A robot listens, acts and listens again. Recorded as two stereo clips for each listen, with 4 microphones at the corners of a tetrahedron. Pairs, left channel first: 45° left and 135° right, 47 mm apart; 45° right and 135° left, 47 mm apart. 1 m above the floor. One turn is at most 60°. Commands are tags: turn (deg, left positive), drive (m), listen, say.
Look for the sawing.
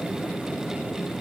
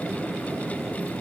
<listen/>
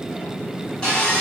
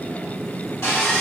<turn deg="-30"/>
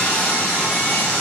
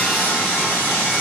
<say>Facing the sawing, 1 to 2 m away.</say>